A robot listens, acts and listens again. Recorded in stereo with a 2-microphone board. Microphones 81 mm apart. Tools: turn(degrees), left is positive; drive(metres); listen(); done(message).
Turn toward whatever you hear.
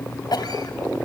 turn(degrees=55)
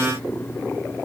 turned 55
listen()
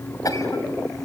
turn(degrees=55)
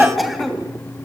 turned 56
done("Facing the cough.")